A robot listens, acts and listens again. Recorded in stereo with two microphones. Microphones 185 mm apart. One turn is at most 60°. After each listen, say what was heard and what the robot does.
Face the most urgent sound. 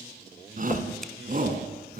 The shout: about 50° right or 130° right. Turn 50° right.
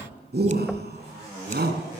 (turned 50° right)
So it is at 75° right. Turn 60° right.
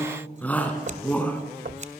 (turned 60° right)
The shout is now 10° left. Turn 10° left.
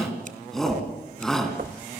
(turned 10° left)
Facing the shout, over 4 m away.